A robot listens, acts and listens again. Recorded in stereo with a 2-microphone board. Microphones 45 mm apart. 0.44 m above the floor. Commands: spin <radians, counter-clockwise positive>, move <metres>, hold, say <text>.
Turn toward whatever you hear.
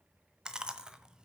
spin -0.35
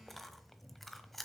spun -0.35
say Found it: chewing, straight ahead, 1 to 2 m away.